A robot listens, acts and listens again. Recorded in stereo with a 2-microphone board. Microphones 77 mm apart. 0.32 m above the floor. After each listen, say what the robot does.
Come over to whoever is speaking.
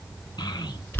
Turn 75° left.
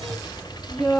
Turn 10° left.
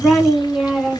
Drive 1.0 m forward.
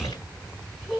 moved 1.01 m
Turn 10° left.
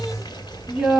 Drive 1.0 m forward.
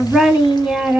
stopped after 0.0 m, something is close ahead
Arrived at the child speaking, straight ahead.